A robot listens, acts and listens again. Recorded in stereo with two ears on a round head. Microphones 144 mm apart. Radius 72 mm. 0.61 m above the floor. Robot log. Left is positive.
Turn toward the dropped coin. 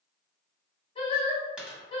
cmd yaw -30
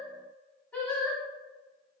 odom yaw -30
cmd idle
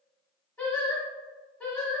end: I heard a dropped coin, but can't make it out now. It was about 25° left or 145° right.